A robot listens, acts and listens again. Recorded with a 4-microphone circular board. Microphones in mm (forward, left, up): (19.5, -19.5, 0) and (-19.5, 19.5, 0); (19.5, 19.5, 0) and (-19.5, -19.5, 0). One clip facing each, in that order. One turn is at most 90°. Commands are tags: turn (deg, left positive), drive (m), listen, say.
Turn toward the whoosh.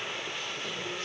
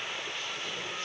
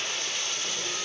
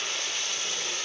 <listen/>
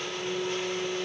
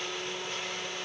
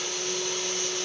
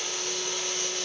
<listen/>
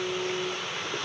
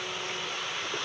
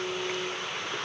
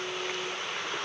<say>I can't make out a whoosh to turn to.</say>